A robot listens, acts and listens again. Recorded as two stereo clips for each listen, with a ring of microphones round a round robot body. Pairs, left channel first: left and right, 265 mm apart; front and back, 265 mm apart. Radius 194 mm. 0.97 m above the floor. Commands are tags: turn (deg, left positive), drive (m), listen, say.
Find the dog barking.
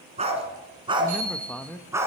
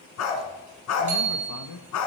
<turn deg="-10"/>
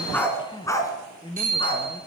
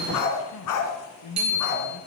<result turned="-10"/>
<turn deg="20"/>
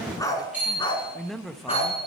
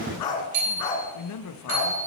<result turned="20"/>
<turn deg="25"/>
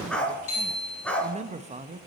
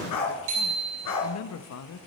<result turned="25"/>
<say>Facing the dog barking.</say>